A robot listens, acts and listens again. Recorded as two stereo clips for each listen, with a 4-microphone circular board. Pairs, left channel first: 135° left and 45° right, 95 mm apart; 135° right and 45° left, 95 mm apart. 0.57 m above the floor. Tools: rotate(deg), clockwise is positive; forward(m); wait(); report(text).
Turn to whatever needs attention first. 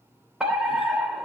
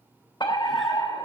rotate(125)
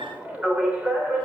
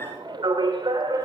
rotate(-30)
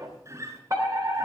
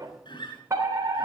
report("Found it: a fire alarm, straight ahead.")